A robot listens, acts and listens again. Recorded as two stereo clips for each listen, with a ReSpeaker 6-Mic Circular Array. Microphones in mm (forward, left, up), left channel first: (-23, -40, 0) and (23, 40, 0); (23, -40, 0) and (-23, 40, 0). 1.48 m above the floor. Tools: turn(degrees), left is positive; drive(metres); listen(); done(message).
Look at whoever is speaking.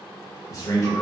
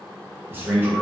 turn(degrees=-175)
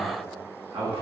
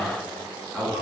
turn(degrees=35)
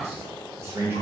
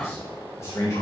done("Found it: a man speaking, straight ahead.")